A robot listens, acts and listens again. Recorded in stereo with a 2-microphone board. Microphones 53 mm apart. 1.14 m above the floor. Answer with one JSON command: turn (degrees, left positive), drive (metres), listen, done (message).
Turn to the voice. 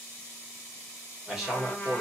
{"turn": -30}
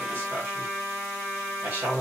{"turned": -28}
{"turn": -140}
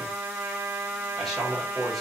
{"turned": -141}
{"done": "Facing the man speaking."}